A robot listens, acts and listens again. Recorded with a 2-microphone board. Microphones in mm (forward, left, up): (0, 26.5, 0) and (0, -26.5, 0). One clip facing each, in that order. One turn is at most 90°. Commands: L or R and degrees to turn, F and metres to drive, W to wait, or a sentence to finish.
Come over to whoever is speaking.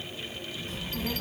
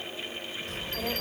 R90
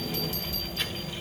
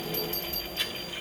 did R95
R10
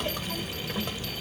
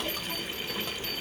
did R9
F1.0
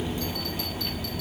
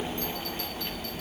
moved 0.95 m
F1.0
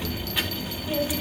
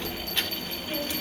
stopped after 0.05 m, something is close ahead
L10
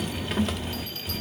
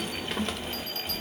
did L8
I am next to the child speaking.